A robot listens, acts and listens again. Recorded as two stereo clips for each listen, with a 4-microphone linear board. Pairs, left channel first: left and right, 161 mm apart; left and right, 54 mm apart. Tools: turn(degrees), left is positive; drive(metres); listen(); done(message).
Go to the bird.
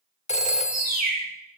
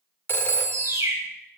turn(degrees=-75)
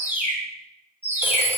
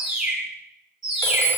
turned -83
turn(degrees=-15)
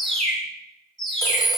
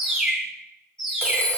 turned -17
drive(metres=1.0)
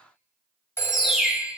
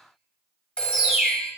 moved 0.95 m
drive(metres=1.0)
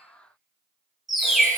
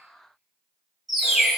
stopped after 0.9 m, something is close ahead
done("Arrived at the bird, straight ahead.")